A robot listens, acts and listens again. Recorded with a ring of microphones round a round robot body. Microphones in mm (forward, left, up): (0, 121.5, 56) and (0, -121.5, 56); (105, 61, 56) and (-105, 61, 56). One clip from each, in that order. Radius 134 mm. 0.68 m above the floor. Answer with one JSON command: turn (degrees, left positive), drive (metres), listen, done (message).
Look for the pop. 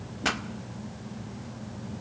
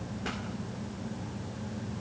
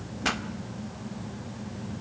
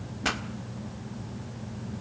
{"turn": 105}
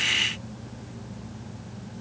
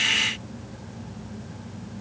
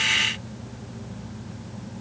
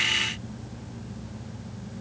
{"done": "Facing where the pop came from. I can't hear it now."}